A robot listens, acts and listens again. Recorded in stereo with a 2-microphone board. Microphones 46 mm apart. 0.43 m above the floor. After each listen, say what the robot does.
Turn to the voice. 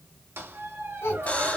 Turn 70° left.
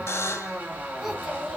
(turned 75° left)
Facing the child speaking.